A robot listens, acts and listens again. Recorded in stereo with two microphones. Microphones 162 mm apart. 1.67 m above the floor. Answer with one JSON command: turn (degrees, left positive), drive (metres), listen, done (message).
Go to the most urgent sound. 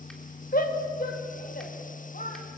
{"turn": 60}
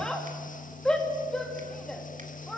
{"drive": 1.0}
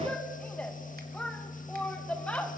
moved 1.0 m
{"turn": 10}
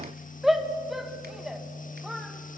{"drive": 1.0}
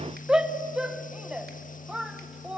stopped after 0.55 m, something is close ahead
{"done": "I am next to the shout."}